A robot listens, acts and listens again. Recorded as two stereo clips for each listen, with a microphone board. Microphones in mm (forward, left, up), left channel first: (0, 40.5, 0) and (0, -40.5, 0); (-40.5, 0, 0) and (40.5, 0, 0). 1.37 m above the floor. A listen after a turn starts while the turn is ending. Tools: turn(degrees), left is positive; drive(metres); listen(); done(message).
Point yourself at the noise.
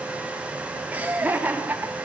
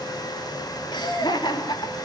turn(degrees=-155)
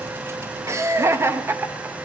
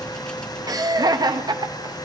turn(degrees=-25)
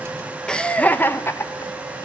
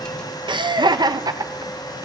turn(degrees=35)
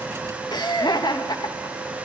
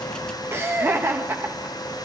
turn(degrees=60)
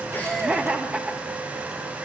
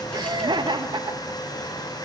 turn(degrees=-15)
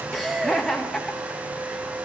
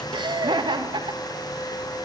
done("Found it: laughter, straight ahead.")